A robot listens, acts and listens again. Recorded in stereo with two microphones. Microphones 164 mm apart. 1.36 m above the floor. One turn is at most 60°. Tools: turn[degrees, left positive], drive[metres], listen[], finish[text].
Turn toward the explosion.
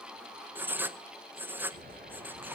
Thought: The explosion: about 70° right or 110° right.
Action: turn[-60]
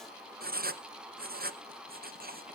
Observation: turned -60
Action: listen[]
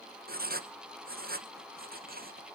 Action: finish[I heard an explosion, but can't make it out now. It was about 10° right or 50° right.]